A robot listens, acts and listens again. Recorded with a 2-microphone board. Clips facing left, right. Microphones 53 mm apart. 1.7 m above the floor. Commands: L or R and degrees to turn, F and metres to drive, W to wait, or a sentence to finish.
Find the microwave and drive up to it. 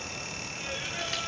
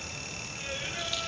W
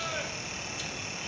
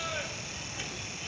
W
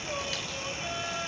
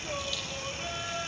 I can't make out a microwave to turn to.